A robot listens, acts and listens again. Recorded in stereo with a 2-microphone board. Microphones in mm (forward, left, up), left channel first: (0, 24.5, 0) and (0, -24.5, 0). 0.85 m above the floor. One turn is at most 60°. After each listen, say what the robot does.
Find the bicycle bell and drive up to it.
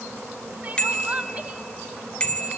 Turn 20° left.
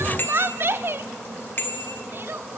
Turn 60° left.
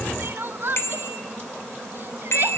Turn 55° left.
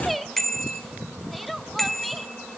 Drive 1.0 m forward.
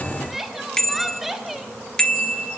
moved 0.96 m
Turn 15° left.
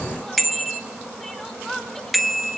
Drive 1.0 m forward.
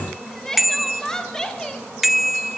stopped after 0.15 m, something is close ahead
Arrived at the bicycle bell, straight ahead.